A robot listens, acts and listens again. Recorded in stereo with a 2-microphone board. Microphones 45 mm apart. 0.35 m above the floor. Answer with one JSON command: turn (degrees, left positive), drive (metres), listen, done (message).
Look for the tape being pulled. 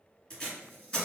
{"turn": 30}
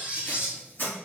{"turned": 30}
{"turn": 140}
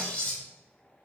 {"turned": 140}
{"listen": true}
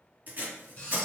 {"turn": -40}
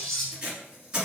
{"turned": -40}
{"turn": -15}
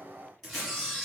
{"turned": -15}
{"done": "Found it: tape being pulled, straight ahead, 1 to 2 m away."}